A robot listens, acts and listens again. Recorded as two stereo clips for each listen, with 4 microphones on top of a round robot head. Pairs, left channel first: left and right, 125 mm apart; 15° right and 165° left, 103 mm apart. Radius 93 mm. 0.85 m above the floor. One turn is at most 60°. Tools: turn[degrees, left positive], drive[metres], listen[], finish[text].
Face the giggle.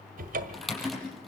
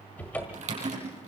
Action: listen[]
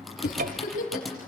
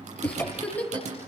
Thought: The giggle: 60° left.
Action: turn[60]
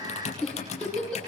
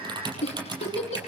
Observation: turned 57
Action: finish[Found it: a giggle, straight ahead, over 4 m away.]